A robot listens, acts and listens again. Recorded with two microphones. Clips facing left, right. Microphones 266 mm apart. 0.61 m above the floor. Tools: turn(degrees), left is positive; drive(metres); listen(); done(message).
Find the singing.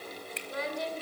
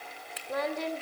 turn(degrees=-65)
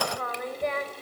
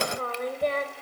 turn(degrees=-35)
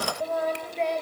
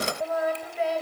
done("Facing the singing.")